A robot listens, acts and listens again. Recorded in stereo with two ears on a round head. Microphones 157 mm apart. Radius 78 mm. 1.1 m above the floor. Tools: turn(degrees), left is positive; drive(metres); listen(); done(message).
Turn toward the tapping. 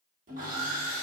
listen()
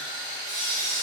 listen()
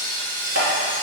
turn(degrees=-75)
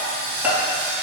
turn(degrees=-10)
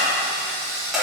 done("Found it: tapping, straight ahead.")